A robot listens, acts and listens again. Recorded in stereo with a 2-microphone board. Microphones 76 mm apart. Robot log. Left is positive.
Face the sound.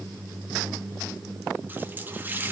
note: The running tap: about 25° right or 155° right.
cmd yaw -25
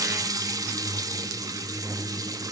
note: So it is at 130° right.
cmd yaw -130
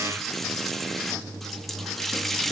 end: Facing the running tap.